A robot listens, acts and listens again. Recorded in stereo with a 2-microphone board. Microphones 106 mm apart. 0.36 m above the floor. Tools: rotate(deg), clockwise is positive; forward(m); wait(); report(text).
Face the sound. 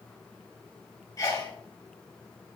rotate(-35)
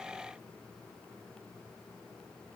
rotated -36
wait()
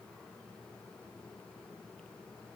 report("I heard a sneeze, but can't make it out now. It was about straight ahead or 110° left.")